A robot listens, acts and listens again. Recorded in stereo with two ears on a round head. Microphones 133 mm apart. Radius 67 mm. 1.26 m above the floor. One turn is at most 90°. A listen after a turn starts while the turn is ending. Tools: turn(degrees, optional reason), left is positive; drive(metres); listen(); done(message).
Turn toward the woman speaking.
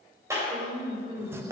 turn(degrees=-50, reason="The woman speaking: about 50° right or 130° right.")
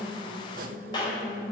turn(degrees=-80, reason="So it is at 80° right.")
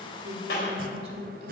turn(degrees=-40, reason="The woman speaking is now 40° right.")
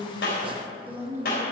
turn(degrees=-15, reason="The woman speaking is now 15° right.")
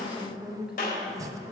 done("Found it: a woman speaking, straight ahead, 1 to 2 m away.")